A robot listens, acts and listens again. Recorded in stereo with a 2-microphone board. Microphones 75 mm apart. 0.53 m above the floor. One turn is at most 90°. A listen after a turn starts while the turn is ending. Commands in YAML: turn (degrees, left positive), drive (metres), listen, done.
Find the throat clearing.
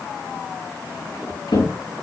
listen: true
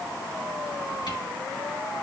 listen: true
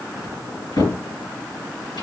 done: "I can't make out throat clearing to turn to."